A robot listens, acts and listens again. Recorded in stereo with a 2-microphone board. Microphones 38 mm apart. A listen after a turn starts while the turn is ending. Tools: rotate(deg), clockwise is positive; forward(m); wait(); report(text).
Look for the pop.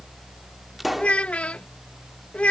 rotate(30)
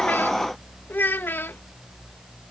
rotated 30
wait()
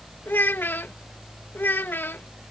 report("I heard a pop, but can't make it out now. It was about 25° left or 145° right.")